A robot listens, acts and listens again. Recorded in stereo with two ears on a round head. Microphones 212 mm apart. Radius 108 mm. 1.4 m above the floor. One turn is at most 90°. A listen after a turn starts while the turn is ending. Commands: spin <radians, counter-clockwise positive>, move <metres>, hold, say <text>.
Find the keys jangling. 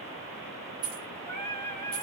spin -1.22
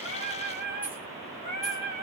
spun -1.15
hold
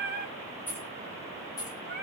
spin 0.26
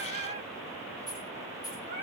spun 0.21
spin 0.26
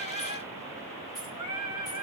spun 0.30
hold
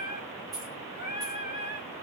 say Facing the keys jangling.